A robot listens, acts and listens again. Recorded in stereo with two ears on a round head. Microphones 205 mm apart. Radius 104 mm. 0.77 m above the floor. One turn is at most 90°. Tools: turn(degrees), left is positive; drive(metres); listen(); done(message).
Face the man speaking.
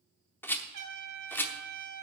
listen()
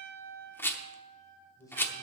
turn(degrees=30)
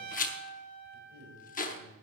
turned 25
turn(degrees=-25)
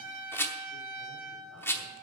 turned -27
listen()
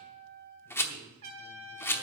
listen()
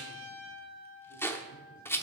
done("I heard a man speaking from this way, but can't make it out now.")